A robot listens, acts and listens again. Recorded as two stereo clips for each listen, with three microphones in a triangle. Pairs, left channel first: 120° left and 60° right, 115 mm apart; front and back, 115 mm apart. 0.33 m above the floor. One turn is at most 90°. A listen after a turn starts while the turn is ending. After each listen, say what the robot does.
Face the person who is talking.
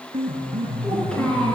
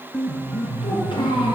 Turn 40° left.
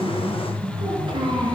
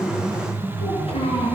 Turn 20° right.
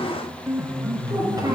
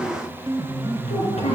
Found it: a child speaking, straight ahead, 2 to 4 m away.